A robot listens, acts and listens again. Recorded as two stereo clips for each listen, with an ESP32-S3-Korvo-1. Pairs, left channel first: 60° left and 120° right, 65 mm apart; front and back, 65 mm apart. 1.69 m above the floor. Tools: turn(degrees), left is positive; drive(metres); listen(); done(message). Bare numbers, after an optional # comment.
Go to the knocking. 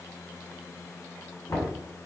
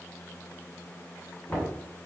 # The knocking: 60° left.
turn(60)
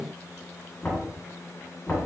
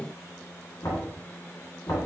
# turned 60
drive(1.0)
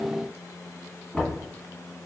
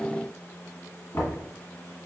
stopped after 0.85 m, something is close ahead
# The knocking is now 15° right.
turn(-15)
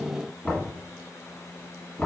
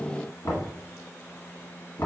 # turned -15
done("Arrived at the knocking, straight ahead.")